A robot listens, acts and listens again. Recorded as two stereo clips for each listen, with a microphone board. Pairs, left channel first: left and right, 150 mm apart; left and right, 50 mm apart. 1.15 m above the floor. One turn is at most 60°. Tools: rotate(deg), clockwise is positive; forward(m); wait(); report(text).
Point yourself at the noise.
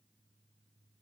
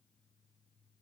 wait()
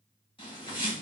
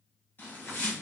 rotate(-35)
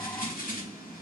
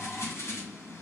rotate(-60)
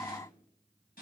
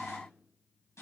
rotate(-60)
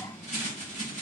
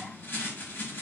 rotate(-55)
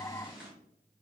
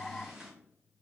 report("Found it: a bird, straight ahead, 1 to 2 m away.")